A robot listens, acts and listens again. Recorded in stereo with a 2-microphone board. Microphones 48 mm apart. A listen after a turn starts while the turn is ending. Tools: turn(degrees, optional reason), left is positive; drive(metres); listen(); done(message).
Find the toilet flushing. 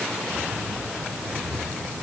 listen()
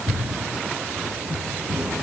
listen()
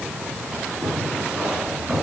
done("I can't make out a toilet flushing to turn to.")